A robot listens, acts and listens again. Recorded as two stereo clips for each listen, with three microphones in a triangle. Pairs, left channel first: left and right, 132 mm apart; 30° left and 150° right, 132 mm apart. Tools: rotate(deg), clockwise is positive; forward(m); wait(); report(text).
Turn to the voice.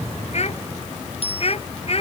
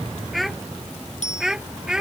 rotate(-125)
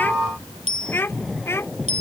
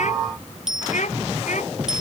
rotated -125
rotate(-20)
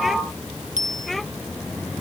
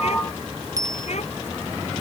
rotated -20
wait()
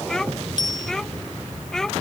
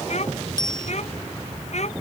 report("Facing the child speaking.")